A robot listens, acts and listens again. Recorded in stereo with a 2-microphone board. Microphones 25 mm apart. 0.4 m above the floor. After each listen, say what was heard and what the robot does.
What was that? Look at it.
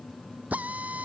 Turn 90° right.
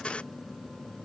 Keep listening.
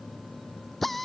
The drill is now 10° left. Turn 10° left.
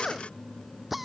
Facing the drill.